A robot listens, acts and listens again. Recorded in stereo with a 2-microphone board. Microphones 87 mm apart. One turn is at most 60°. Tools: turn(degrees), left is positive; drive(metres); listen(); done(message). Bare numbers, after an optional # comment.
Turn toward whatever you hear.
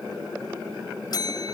# The bell: about 50° left or 130° left.
turn(50)
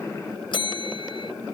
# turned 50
# So it is at 75° left.
turn(60)
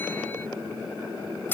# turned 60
# The bell is now 20° left.
turn(20)
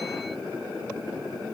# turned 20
listen()
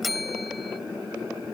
done("Facing the bell.")